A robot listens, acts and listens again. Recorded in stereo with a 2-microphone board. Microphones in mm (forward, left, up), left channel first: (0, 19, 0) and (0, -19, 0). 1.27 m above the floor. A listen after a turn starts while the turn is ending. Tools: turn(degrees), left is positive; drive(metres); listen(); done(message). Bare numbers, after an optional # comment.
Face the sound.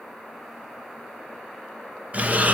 # The breathing: about 40° right or 140° right.
turn(-40)
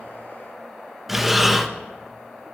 # So it is at 10° right.
turn(-10)
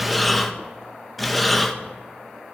done("Found it: breathing, straight ahead.")